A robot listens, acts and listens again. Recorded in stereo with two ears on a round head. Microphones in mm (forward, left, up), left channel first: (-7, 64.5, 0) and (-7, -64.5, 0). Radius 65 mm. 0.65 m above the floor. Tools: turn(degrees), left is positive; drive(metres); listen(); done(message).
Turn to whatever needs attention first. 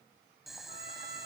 listen()
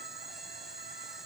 listen()
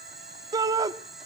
turn(degrees=-25)
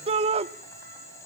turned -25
turn(degrees=-125)
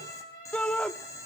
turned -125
turn(degrees=10)
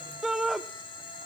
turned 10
done("Facing the shout.")